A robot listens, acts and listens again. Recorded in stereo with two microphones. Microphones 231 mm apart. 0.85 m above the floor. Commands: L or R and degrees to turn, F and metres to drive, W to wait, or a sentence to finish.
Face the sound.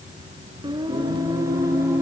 R30
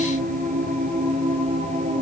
R150
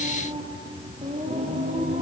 R30
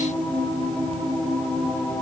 Facing the singing.